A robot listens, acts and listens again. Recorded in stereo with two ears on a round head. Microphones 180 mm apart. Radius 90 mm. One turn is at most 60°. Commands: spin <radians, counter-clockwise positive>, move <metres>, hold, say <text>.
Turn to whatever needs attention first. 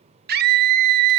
spin -0.87
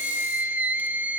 spin -0.17
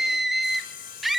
say Facing the scream, 2 to 4 m away.